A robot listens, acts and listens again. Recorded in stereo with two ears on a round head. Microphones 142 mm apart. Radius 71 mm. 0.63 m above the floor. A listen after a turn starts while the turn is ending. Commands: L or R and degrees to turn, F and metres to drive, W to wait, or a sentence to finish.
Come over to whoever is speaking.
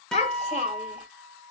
L45
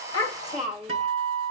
F1.0
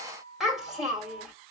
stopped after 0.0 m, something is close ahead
Something is in my way. I am facing the child speaking but have not reached it.